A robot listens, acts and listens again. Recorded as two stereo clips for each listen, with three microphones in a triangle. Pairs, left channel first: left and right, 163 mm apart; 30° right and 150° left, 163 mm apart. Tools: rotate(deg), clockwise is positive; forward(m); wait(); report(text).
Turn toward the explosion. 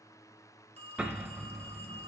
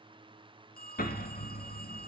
report("Found it: an explosion, straight ahead.")